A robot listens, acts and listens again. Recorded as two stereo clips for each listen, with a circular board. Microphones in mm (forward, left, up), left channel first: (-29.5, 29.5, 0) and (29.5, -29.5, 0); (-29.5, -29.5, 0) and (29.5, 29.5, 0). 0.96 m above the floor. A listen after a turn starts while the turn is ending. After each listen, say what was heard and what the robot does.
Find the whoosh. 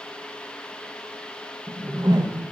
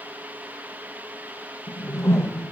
The whoosh: 80° right. Turn 80° right.
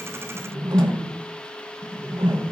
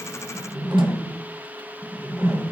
The whoosh is now 15° right. Turn 15° right.
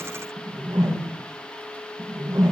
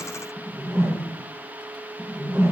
Facing the whoosh.